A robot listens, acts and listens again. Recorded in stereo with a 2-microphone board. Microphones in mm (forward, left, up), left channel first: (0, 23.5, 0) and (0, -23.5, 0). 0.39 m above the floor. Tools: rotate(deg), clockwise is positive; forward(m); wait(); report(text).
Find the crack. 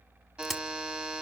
rotate(-30)
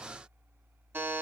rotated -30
wait()
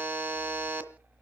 report("I heard a crack, but can't make it out now. It was about 30° right or 150° left.")